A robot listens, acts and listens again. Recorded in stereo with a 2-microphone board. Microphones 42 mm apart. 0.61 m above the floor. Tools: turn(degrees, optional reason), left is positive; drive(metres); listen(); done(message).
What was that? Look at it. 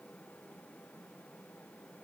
listen()
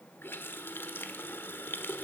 turn(degrees=65, reason="The running tap: about 65° left or 115° left.")
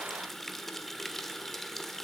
done("Facing the running tap.")